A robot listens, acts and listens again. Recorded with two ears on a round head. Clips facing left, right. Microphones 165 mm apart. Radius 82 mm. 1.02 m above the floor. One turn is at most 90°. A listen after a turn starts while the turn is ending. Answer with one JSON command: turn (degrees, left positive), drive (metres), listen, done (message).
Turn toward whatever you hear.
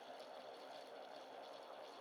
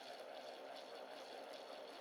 {"listen": true}
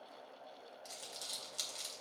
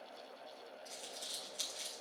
{"turn": 60}
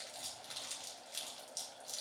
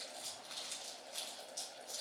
{"turn": 60}
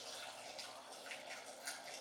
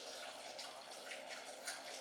{"turn": 20}
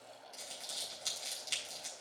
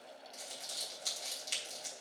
{"done": "Facing the crumpling."}